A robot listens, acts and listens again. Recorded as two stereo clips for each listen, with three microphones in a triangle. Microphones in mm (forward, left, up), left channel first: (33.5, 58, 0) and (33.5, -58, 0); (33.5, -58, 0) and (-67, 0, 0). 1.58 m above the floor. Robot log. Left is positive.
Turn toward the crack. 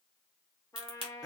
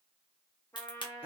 note: The crack: 65° right.
cmd yaw -65
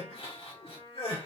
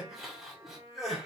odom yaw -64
end: Facing where the crack came from. I can't hear it now.